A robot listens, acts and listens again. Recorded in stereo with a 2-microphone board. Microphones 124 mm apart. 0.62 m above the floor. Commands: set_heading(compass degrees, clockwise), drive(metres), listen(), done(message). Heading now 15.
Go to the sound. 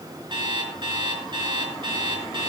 set_heading(55)
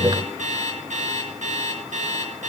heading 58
set_heading(158)
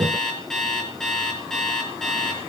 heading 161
drive(1.0)
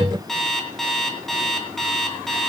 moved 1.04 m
drive(1.0)
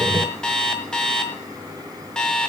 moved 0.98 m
drive(1.0)
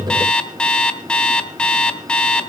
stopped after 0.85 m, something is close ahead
set_heading(151)
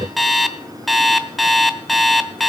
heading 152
done("I am next to the alarm clock.")